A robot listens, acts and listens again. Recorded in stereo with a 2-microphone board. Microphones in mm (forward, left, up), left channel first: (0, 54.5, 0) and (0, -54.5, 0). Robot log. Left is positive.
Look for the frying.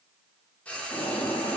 cmd yaw +30
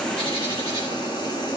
cmd idle
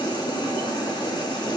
cmd idle
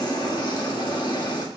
end: I heard frying, but can't make it out now. It was about 20° right or 140° left.